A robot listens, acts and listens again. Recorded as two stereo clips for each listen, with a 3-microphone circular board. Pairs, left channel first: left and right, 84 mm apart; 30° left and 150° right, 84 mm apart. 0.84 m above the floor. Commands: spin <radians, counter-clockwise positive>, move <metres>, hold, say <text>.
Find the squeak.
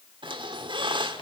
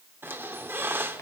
spin -1.57
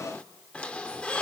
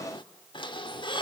spin 0.26
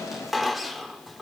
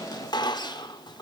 say Facing the squeak.